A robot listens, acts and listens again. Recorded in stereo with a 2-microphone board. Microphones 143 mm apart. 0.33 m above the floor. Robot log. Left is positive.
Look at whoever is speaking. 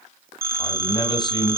note: The man speaking: about 30° left or 150° left.
cmd yaw +30
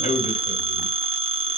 note: So it is at 115° left.
cmd yaw +115
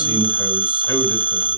note: The man speaking is now 25° left.
cmd yaw +25
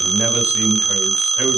note: The man speaking is now 15° right.
cmd yaw -15
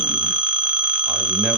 cmd idle
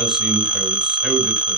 end: Facing the man speaking, 1 to 2 m away.